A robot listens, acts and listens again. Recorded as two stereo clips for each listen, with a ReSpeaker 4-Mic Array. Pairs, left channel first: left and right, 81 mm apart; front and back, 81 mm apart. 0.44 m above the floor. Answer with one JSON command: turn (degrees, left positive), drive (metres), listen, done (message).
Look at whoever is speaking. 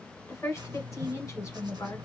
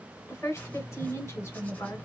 {"turn": 45}
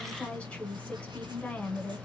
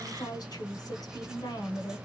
{"turn": 15}
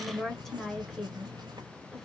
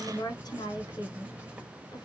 {"done": "Facing the woman speaking, 1 to 2 m away."}